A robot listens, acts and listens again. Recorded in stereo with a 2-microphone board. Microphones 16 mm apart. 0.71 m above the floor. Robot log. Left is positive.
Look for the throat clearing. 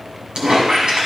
cmd idle
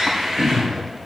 note: The throat clearing: about 65° right or 115° right.
cmd yaw -65
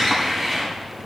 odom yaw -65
cmd idle
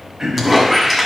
note: So it is at 50° right.
cmd yaw -50
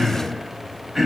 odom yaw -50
end: Found it: throat clearing, straight ahead, 2 to 4 m away.